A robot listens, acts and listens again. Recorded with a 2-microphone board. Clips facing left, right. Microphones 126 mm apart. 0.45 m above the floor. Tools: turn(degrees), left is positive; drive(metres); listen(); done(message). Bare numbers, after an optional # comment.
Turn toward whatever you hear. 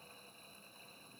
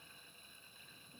listen()
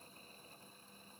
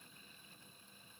listen()
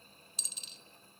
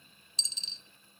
# The dropped coin: about 30° right or 150° right.
turn(-30)
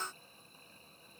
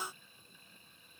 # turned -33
listen()
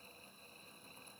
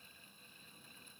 done("I heard a dropped coin, but can't make it out now. It was about 5° left or 120° right.")